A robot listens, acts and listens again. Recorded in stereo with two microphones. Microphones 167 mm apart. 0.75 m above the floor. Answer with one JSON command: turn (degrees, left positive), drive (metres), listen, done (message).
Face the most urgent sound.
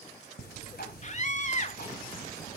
{"turn": 45}
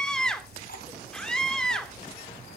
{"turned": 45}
{"done": "Found it: a scream, straight ahead."}